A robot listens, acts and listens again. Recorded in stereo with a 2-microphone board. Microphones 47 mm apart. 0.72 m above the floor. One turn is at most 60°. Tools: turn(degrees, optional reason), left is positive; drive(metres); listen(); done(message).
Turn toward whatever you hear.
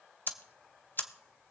turn(degrees=45, reason="The ticking: about 45° left or 135° left.")
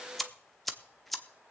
done("Found it: ticking, straight ahead.")